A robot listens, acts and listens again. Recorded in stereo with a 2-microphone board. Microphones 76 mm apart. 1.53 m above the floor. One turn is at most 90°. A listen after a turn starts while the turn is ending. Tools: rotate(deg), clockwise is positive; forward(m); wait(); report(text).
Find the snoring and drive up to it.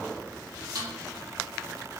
wait()
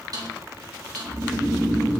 rotate(70)
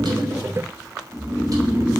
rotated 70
rotate(25)
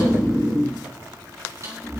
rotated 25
rotate(10)
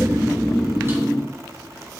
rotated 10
forward(1.0)
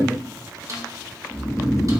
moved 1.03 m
forward(1.0)
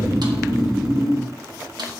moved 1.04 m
forward(1.0)
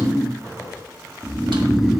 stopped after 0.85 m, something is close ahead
report("I am next to the snoring.")